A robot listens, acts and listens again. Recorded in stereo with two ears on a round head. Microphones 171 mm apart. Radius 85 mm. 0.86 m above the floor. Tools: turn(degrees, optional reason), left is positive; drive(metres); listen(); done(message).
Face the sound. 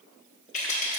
turn(degrees=35, reason="The rattle: about 35° left or 145° left.")
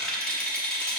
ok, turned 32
done("Facing the rattle, 1 to 2 m away.")